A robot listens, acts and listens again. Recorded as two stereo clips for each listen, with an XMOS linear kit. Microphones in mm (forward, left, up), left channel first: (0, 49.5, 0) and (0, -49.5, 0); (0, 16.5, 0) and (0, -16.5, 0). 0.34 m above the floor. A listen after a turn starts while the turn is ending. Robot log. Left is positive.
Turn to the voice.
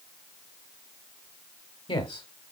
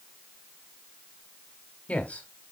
note: The man speaking: about 55° left or 125° left.
cmd yaw +55
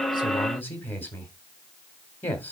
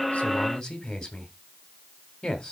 note: So it is at 25° left.
cmd yaw +25
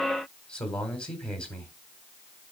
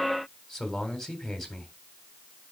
note: The man speaking is now 10° left.
cmd yaw +10
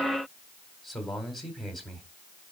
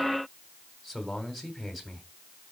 end: Facing the man speaking.